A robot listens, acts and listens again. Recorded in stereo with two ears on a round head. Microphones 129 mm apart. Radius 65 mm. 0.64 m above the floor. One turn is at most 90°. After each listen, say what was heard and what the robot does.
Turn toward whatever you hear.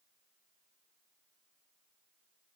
Keep listening.
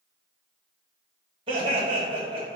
The laughter: about 35° right or 145° right. Turn 35° right.
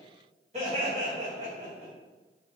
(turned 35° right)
So it is at 130° right. Turn 90° right.
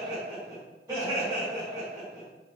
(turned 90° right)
The laughter is now 20° right. Turn 20° right.
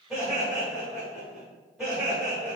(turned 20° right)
Facing the laughter, 1 to 2 m away.